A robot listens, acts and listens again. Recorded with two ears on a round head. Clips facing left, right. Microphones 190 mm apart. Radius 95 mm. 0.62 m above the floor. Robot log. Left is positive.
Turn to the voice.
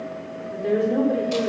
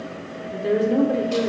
cmd yaw -30
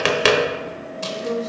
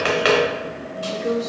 note: So it is at 145° right.
cmd yaw -145
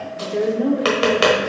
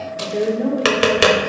note: The woman speaking is now 10° left.
cmd yaw +10
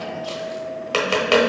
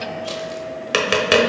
cmd idle
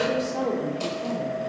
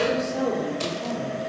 end: Facing the woman speaking.